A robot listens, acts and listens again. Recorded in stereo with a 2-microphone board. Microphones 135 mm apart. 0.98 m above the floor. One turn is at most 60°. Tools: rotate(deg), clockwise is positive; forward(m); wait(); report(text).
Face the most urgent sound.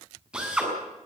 wait()
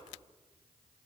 wait()
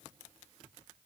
report("I can't make out anything urgent, only a drill.")